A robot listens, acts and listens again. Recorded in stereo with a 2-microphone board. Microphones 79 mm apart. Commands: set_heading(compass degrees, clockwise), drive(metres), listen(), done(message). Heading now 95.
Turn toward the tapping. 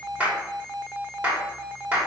listen()
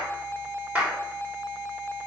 listen()
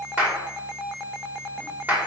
done("I can't make out tapping to turn to.")